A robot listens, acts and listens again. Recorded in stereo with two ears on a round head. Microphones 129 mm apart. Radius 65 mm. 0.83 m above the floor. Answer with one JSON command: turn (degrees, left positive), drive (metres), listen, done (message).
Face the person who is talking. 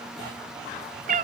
{"listen": true}
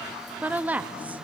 {"turn": -30}
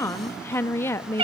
{"turn": 20}
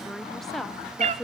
{"done": "Found it: a woman speaking, straight ahead."}